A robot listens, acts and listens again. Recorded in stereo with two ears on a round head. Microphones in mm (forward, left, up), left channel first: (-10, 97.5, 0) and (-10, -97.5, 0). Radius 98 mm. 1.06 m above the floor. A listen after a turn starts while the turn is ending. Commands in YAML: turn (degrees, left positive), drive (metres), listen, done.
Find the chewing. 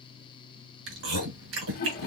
turn: -65
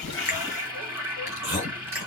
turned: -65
turn: -10
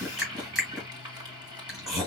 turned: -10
done: "Facing the chewing."